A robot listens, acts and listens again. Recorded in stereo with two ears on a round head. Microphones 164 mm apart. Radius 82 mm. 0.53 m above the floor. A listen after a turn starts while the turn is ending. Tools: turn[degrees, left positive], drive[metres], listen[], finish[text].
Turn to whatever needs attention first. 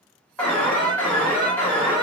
Action: turn[30]
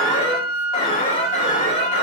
Thought: So it is at 135° left.
Action: turn[135]
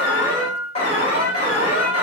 Thought: The alarm is now 40° left.
Action: turn[40]
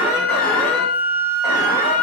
Action: listen[]
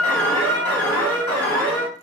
Thought: The alarm is now 15° left.
Action: turn[15]
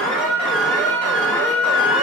Action: finish[Facing the alarm.]